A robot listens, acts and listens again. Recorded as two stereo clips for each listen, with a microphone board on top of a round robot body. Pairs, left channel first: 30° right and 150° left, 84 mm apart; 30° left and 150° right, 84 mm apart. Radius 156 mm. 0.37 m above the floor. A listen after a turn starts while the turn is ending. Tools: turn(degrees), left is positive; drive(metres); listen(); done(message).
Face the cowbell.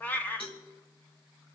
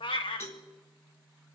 turn(degrees=-30)
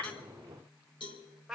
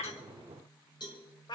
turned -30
done("Facing the cowbell.")